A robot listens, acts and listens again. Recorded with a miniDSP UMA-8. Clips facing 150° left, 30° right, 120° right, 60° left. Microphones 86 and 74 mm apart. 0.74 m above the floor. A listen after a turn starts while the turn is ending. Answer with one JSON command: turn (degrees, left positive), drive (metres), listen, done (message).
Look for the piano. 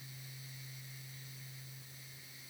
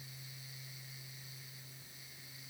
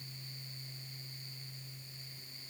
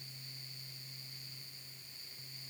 {"listen": true}
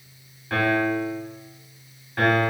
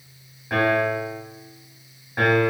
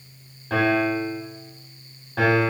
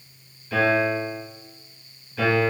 {"turn": -105}
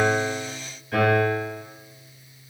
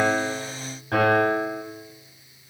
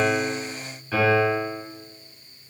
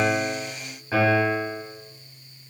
{"done": "Found it: a piano, straight ahead."}